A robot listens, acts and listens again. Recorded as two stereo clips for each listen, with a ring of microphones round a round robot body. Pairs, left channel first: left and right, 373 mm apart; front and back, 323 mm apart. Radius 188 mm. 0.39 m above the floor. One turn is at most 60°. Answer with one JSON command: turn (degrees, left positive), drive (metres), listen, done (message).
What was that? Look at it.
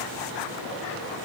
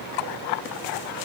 {"listen": true}
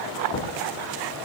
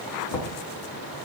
{"turn": 15}
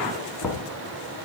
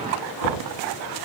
{"done": "Found it: knocking, straight ahead, 2 to 4 m away."}